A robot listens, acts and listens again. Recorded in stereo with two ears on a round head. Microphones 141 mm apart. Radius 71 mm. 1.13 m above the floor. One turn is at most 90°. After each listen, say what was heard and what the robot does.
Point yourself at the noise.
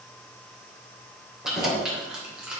Turn 30° right.
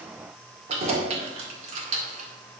So it is at 135° right. Turn 90° right.
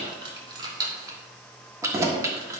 The keys jangling is now 20° right. Turn 20° right.
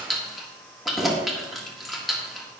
Found it: keys jangling, straight ahead, 1 to 2 m away.